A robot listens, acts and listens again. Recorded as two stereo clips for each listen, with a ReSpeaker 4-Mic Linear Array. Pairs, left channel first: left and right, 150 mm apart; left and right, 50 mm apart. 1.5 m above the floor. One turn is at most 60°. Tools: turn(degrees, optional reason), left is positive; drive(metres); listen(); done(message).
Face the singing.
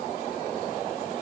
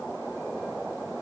listen()
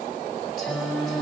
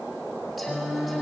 turn(degrees=30)
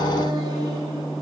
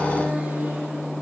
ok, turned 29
turn(degrees=-30, reason="So it is at 30° right.")
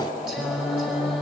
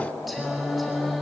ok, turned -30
done("Found it: singing, straight ahead, over 4 m away.")